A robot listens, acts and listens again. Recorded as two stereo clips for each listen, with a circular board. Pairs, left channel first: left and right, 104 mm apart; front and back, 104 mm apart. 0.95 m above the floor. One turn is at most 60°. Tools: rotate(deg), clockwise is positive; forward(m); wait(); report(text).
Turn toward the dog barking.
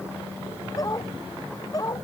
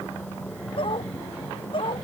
rotate(-35)
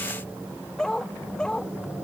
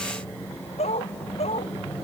rotate(-10)
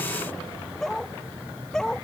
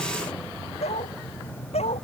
report("Facing the dog barking.")